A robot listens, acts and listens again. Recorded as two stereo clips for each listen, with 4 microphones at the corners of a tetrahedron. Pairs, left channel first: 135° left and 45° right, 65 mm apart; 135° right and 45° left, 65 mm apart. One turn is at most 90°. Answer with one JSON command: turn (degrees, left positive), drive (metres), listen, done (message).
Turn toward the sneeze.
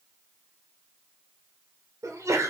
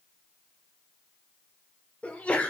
{"turn": -70}
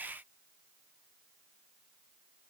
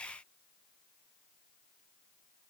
{"done": "Facing where the sneeze came from. I can't hear it now."}